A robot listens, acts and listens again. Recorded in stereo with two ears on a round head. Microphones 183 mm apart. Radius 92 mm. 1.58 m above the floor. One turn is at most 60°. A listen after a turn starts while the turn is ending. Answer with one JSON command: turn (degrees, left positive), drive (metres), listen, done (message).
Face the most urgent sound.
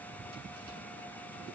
{"listen": true}
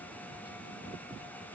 {"listen": true}
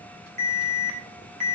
{"turn": -35}
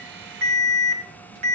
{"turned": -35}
{"turn": -60}
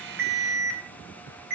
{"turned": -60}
{"turn": -45}
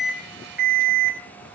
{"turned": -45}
{"done": "Found it: an alarm, straight ahead, over 4 m away."}